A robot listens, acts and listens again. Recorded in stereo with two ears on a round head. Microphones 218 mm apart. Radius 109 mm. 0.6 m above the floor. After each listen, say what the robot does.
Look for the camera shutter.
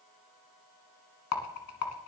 Keep listening.
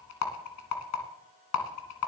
Keep listening.
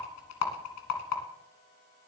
I can't make out a camera shutter to turn to.